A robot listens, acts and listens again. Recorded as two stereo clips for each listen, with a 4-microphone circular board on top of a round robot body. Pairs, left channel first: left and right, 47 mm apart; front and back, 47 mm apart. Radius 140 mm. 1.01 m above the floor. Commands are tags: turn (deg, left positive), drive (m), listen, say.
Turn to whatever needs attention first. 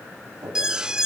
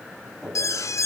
<turn deg="-15"/>
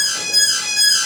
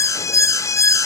<say>Facing the alarm.</say>